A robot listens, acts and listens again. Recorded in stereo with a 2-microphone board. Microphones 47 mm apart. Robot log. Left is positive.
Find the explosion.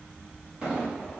note: The explosion: about 20° right or 160° right.
cmd yaw -20
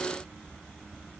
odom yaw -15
cmd idle
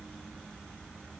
end: I heard an explosion, but can't make it out now. It was about 5° right or 145° right.